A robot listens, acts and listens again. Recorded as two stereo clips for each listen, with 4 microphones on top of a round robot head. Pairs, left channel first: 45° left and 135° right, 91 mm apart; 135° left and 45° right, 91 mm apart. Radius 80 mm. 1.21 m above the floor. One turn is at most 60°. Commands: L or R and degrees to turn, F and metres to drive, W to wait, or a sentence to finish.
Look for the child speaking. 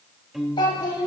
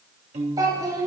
Facing the child speaking.